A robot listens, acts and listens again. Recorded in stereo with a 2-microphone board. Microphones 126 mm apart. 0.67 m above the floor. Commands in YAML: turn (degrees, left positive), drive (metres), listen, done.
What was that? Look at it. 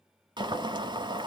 turn: -35
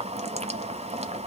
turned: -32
turn: -105
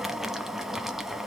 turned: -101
done: "Facing the boiling."